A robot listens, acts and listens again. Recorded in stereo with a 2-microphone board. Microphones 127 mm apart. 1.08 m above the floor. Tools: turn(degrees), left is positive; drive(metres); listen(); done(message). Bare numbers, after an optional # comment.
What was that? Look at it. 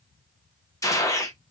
# The gunshot: about 25° left or 155° left.
turn(25)
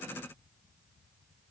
listen()
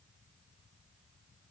done("I heard a gunshot, but can't make it out now. It was about straight ahead or 130° left.")